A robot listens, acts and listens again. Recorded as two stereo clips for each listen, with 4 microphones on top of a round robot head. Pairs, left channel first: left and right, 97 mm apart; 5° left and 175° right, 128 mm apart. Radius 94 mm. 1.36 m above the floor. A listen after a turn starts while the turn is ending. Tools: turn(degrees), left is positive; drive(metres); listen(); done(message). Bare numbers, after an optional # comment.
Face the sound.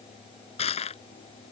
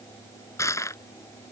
# The crushing: 75° left.
turn(75)
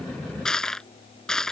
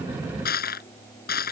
done("Found it: crushing, straight ahead.")